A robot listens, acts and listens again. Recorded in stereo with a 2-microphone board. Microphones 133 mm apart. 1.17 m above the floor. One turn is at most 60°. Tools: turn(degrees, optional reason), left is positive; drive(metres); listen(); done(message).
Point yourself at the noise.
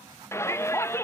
turn(degrees=20, reason="The shout: about 20° left or 160° left.")
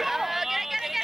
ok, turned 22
done("Facing the shout.")